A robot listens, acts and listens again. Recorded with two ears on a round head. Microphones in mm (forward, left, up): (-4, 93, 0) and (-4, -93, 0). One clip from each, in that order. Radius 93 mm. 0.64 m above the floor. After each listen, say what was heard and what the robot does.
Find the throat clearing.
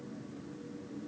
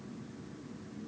Keep listening.
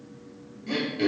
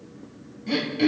Turn 30° right.
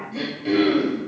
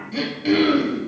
So it is at 145° right. Turn 145° right.
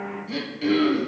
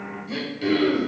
Found it: throat clearing, straight ahead, 1 to 2 m away.